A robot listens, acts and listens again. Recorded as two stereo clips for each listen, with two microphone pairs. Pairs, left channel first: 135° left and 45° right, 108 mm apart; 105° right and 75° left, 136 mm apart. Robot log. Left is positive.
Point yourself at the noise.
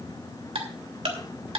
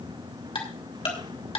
note: The ticking: 60° right.
cmd yaw -60
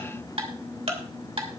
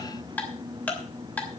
note: The ticking is now 25° right.
cmd yaw -25
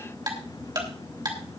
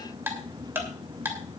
end: Found it: ticking, straight ahead, 2 to 4 m away.